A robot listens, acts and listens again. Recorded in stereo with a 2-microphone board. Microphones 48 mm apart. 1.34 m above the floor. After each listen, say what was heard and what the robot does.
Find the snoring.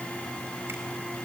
Keep listening.
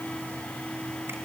Keep listening.
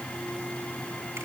I can't make out snoring to turn to.